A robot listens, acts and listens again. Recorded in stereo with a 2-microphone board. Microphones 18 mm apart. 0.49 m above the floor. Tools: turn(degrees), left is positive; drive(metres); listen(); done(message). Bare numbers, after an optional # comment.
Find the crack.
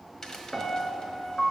# The crack: about 30° left or 150° left.
turn(30)
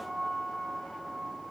listen()
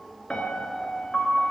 done("I heard a crack, but can't make it out now. It was about straight ahead or 120° left.")